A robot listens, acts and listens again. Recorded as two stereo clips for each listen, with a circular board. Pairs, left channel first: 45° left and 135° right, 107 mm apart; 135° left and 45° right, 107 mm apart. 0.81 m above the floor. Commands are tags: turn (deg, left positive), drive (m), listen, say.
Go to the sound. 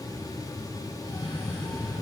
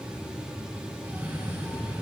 <turn deg="25"/>
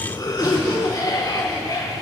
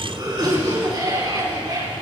<drive m="1.0"/>
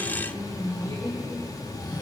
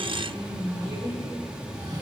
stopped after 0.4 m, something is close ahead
<say>Something is in my way. I am facing the cough but have not reached it.</say>